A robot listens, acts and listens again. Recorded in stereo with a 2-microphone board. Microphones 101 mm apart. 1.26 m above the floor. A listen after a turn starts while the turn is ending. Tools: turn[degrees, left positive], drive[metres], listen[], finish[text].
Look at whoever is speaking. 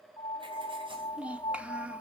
Action: turn[-30]
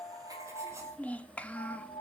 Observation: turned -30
Thought: So it is at 15° left.
Action: turn[15]
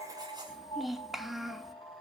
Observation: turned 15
Action: finish[Found it: a child speaking, straight ahead, 1 to 2 m away.]